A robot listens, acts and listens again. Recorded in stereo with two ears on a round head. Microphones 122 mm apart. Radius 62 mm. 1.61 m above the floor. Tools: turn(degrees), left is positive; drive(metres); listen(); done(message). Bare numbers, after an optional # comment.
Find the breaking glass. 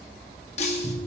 # The breaking glass: about 50° left or 130° left.
turn(50)
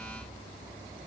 listen()
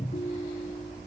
done("I heard breaking glass, but can't make it out now. It was about straight ahead or 80° left.")